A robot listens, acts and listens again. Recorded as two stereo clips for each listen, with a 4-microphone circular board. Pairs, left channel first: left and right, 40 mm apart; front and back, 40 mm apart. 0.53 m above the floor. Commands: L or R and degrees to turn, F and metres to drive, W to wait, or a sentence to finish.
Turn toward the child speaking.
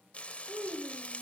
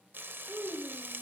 R130
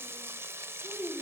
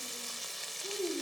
Facing the child speaking.